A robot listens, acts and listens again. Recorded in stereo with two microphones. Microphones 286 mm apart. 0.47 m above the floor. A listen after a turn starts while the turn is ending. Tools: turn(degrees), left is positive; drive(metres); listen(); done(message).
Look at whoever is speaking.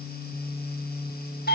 listen()
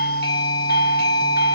listen()
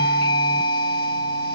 done("I can't make out anyone speaking to turn to.")